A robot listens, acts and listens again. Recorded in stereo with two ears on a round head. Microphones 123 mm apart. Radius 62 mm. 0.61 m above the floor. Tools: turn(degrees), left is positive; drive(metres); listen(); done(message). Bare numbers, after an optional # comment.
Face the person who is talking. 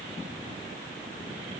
listen()
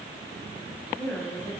turn(30)
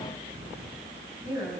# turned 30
# So it is at 20° right.
turn(-20)
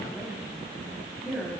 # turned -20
done("Facing the woman speaking, over 4 m away.")